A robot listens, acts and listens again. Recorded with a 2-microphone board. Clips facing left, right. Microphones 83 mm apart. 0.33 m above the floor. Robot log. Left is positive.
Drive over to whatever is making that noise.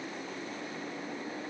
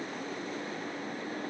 cmd idle
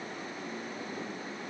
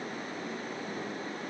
cmd idle
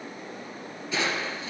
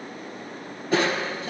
note: The crushing: about 50° right or 130° right.
cmd yaw -50
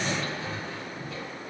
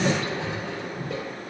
note: So it is at 75° right.
cmd yaw -75
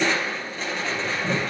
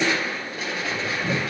cmd fwd 1.0
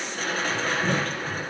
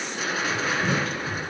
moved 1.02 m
note: The crushing is now 10° right.
cmd yaw -10
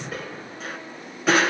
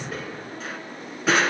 cmd fwd 1.0
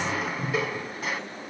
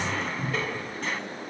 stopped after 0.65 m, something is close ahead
note: The crushing is now 10° left.
cmd yaw +10
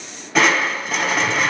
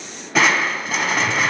end: Arrived at the crushing, straight ahead.